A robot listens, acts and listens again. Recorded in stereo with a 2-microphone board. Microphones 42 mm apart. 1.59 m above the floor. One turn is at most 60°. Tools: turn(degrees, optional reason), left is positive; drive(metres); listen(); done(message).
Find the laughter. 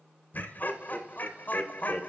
turn(degrees=45, reason="The laughter: about 45° left or 135° left.")
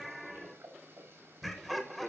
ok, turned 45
done("Facing the laughter.")